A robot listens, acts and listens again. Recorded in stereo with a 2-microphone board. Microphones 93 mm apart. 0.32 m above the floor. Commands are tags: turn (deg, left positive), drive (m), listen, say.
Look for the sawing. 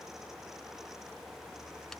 <listen/>
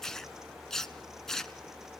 <listen/>
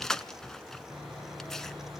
<turn deg="-30"/>
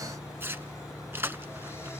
<turn deg="25"/>
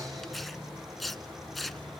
<say>Facing the sawing.</say>